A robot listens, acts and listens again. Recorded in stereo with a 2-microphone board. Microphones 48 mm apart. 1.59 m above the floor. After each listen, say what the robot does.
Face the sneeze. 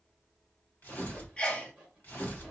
Turn 20° left.
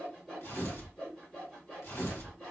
Keep listening.
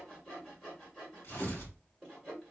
I heard a sneeze, but can't make it out now. It was about straight ahead or 140° left.